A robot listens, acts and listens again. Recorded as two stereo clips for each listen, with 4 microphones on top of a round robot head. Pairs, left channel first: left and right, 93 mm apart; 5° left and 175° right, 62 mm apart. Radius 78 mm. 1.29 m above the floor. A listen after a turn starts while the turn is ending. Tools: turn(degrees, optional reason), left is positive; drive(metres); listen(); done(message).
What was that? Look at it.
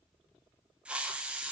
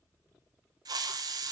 turn(degrees=-170, reason="The hiss: 170° right.")
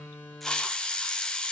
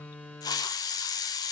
turn(degrees=10, reason="The hiss is now 10° left.")
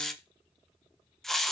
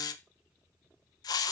done("Found it: a hiss, straight ahead.")